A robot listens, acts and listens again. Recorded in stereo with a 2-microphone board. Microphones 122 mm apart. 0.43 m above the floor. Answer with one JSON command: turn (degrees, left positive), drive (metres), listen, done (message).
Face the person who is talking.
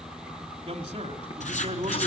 {"turn": -45}
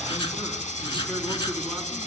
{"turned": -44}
{"listen": true}
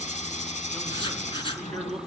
{"done": "Facing the man speaking, over 4 m away."}